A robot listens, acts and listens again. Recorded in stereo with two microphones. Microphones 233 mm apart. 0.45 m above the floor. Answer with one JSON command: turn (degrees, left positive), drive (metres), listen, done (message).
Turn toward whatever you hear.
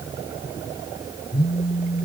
{"turn": 25}
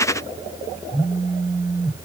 {"done": "Facing the phone buzzing."}